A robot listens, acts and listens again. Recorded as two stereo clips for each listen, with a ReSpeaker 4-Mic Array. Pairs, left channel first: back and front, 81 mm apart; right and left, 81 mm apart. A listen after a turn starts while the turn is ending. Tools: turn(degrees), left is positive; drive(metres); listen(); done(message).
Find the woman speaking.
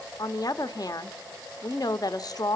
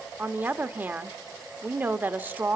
turn(degrees=155)
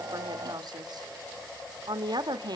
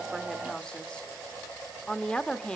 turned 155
turn(degrees=-15)
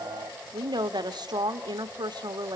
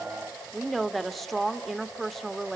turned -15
done("Found it: a woman speaking, straight ahead.")